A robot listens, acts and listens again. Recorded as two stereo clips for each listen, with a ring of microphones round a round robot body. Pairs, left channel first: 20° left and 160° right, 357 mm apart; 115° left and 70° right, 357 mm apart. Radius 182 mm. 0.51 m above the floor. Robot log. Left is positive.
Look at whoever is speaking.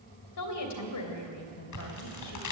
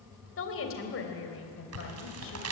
note: The woman speaking: 60° left.
cmd yaw +60
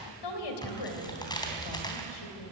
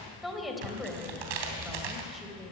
note: The woman speaking is now 20° left.
cmd yaw +20
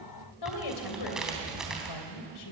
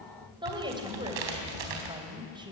note: The woman speaking is now 10° left.
cmd yaw +10
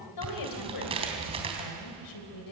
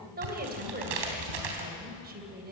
end: Found it: a woman speaking, straight ahead, 2 to 4 m away.